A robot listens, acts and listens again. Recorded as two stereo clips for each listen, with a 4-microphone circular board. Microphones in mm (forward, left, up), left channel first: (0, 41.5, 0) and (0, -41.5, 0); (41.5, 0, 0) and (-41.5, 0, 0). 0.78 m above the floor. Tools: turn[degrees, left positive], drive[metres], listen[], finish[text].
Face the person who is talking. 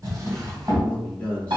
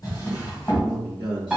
Thought: The man speaking: 15° left.
Action: turn[15]
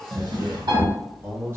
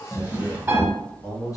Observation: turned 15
Thought: The man speaking is now 40° right.
Action: turn[-40]
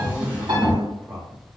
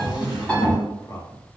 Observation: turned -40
Thought: The man speaking is now 40° right.
Action: turn[-40]
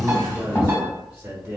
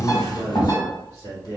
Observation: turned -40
Thought: The man speaking is now 20° right.
Action: turn[-20]
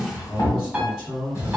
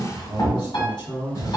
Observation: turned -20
Action: finish[Facing the man speaking, 1 to 2 m away.]